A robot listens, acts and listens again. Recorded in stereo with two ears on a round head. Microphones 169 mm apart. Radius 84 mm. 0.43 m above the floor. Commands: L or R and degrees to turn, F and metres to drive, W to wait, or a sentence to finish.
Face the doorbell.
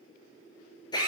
W
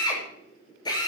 W
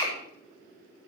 I can't make out a doorbell, only a drill.